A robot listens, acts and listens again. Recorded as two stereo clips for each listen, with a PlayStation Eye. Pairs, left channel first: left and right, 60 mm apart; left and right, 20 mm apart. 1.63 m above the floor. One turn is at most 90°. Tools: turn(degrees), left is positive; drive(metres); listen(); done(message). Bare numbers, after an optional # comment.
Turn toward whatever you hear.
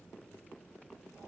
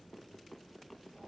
listen()
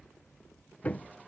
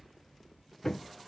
# The hammering: about 25° left or 155° left.
turn(25)
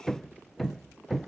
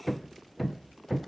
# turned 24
done("Facing the hammering.")